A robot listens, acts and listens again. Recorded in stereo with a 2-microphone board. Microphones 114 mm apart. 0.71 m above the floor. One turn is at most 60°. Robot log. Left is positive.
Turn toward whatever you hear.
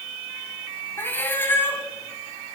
note: The cat meowing: about 20° left or 160° left.
cmd yaw +20
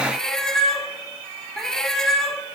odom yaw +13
end: Facing the cat meowing, 1 to 2 m away.